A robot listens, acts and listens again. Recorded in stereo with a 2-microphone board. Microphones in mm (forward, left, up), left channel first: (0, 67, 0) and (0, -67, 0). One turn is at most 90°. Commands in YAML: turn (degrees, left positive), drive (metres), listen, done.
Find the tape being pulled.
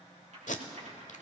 turn: 70
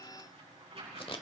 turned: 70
turn: 45
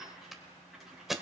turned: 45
done: "Found it: tape being pulled, straight ahead, under 1 m away."